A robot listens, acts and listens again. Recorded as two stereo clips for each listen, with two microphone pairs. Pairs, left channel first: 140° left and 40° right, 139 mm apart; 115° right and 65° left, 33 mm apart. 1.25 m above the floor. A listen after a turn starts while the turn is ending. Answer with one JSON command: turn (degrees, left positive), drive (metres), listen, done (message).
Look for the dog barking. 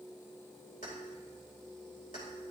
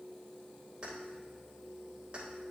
{"listen": true}
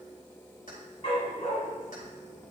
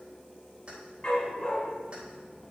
{"turn": 180}
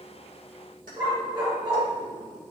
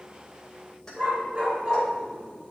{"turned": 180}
{"turn": 15}
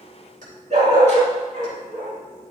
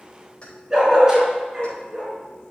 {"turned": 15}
{"done": "Facing the dog barking, over 4 m away."}